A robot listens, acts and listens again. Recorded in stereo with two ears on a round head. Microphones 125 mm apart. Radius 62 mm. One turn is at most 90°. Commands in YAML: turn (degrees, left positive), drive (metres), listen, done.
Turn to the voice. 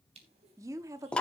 turn: -25
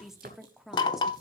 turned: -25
done: "Facing the woman speaking."